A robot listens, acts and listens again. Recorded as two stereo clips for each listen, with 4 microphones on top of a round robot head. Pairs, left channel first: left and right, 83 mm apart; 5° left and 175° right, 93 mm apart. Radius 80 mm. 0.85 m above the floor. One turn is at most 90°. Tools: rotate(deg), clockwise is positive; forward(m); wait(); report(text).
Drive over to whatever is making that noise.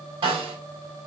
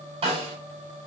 rotate(90)
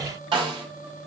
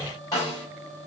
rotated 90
rotate(55)
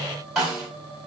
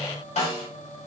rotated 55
forward(1.0)
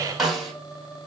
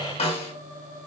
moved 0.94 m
forward(1.0)
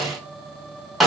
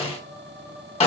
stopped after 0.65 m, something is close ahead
report("Arrived at the snare drum, straight ahead.")